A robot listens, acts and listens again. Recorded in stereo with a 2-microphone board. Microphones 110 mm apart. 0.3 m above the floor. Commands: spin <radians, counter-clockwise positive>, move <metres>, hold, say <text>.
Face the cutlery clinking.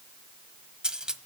spin -0.52
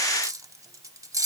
spin -2.53
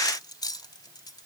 hold
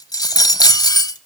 spin 0.79
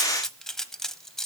hold
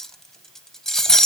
say Found it: cutlery clinking, straight ahead, under 1 m away.